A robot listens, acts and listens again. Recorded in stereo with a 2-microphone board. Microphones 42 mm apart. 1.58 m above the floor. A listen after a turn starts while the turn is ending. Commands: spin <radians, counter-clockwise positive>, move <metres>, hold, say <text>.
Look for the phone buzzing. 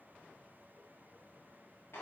hold
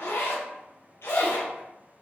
hold
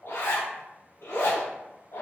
say I can't make out a phone buzzing to turn to.